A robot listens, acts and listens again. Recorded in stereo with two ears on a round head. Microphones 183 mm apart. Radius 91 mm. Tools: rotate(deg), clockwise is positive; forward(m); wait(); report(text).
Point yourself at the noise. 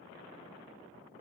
wait()
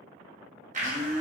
rotate(40)
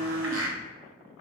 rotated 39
rotate(100)
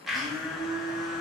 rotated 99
report("Found it: a blender, straight ahead, under 1 m away.")